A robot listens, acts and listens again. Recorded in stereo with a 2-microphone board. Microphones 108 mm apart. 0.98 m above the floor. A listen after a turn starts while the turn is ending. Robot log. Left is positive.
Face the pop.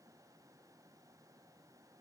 cmd idle
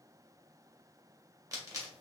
note: The pop: about 35° right or 145° right.
cmd yaw -35
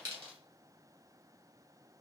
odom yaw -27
cmd idle
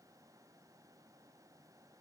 end: I heard a pop, but can't make it out now. It was about 5° right or 120° right.